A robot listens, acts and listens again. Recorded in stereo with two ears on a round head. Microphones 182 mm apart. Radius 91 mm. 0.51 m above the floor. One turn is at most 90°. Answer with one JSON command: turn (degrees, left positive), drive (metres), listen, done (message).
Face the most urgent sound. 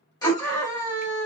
{"turn": 20}
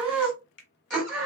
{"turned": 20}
{"done": "Found it: a scream, straight ahead."}